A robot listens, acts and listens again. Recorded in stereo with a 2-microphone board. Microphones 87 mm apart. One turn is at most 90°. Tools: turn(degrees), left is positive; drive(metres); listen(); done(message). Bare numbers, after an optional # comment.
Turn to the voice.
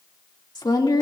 # The woman speaking: about 55° left or 125° left.
turn(55)
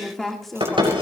done("Found it: a woman speaking, straight ahead.")